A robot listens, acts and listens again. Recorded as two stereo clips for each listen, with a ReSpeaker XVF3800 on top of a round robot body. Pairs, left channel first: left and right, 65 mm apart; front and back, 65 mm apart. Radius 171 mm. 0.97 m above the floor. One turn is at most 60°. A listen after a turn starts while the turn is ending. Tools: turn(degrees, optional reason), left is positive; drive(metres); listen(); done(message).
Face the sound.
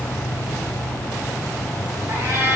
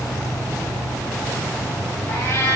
turn(degrees=-45, reason="The cat meowing: 45° right.")
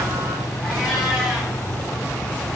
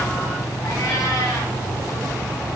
listen()
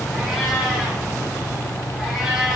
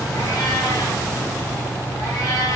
done("Found it: a cat meowing, straight ahead, over 4 m away.")